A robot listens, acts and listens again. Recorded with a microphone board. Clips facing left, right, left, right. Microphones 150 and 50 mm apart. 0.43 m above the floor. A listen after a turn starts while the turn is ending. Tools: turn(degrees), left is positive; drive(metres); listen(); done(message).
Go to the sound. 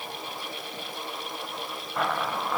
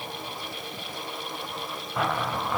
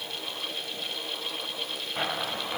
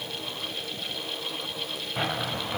turn(degrees=30)
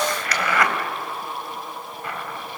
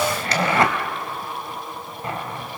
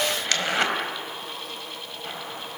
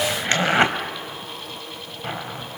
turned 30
turn(degrees=-30)
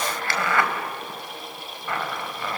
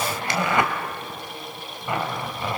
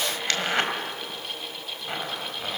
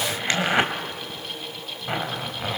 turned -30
turn(degrees=-20)
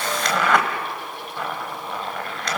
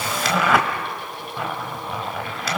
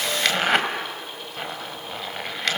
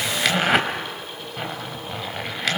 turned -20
drive(metres=1.0)
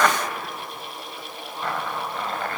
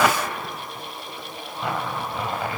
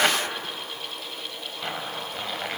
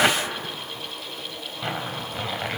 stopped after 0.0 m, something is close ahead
turn(degrees=-10)
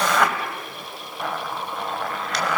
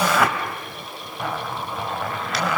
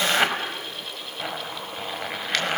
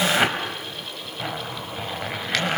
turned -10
done("Something is in my way. I am facing the zipper but have not reached it.")